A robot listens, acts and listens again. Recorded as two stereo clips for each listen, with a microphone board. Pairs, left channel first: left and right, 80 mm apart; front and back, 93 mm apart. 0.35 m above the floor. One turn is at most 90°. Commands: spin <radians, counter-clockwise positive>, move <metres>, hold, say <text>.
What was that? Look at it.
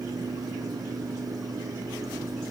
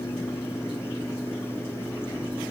hold
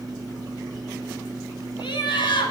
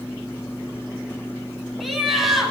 spin 1.57
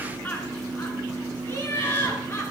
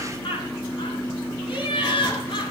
spin 0.52
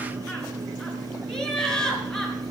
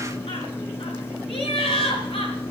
spin 0.17
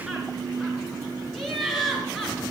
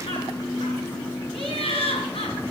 say Facing the laughter, over 4 m away.